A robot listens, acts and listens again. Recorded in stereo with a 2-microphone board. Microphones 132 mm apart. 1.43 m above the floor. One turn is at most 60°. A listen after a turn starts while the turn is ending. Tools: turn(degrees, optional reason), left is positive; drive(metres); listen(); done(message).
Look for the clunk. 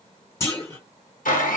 turn(degrees=20, reason="The clunk: about 20° left or 160° left.")
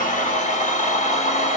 listen()
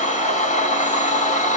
done("I heard a clunk, but can't make it out now. It was about straight ahead or 140° left.")